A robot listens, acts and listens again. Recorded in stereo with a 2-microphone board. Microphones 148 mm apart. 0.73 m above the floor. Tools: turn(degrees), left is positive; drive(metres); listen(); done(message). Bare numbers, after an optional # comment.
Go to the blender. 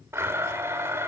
# The blender: about 15° right or 165° right.
turn(-15)
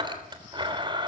# So it is at 150° right.
turn(-150)
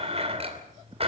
# The blender is now 45° right.
turn(-45)
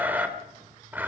# The blender is now 10° right.
turn(-10)
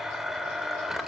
drive(1.0)
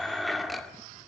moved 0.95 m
drive(1.0)
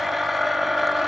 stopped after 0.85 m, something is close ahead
done("Arrived at the blender, straight ahead.")